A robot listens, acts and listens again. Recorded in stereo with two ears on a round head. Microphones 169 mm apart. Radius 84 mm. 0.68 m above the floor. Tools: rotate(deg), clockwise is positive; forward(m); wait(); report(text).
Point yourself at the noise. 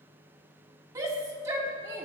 rotate(15)
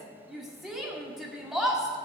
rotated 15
report("Found it: a shout, straight ahead.")